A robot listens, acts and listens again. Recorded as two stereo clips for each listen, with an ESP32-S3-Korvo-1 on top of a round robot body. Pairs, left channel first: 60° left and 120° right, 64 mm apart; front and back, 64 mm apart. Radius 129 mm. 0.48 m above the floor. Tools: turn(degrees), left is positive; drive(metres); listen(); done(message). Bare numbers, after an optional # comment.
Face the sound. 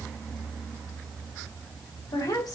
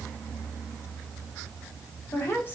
# The woman speaking: 55° left.
turn(55)
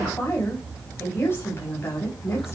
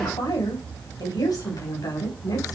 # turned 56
# The woman speaking is now 10° left.
turn(10)
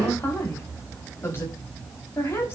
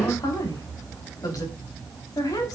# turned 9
# The woman speaking is now 10° left.
turn(10)
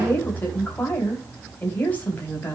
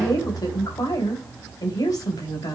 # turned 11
done("Found it: a woman speaking, straight ahead, over 4 m away.")